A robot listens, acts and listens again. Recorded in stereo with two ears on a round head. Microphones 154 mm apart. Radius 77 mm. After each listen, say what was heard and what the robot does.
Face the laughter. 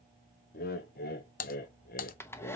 The laughter: about 55° left or 125° left. Turn 55° left.
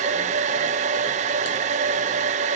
Keep listening.
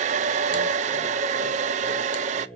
Found it: laughter, straight ahead.